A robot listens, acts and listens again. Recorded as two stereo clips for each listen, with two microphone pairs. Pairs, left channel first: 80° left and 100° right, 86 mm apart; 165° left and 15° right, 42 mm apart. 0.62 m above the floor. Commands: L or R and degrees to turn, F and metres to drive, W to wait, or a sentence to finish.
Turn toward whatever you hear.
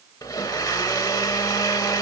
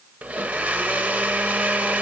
L30
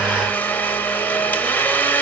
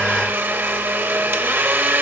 L10
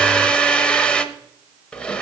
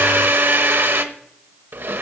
Found it: a blender, straight ahead.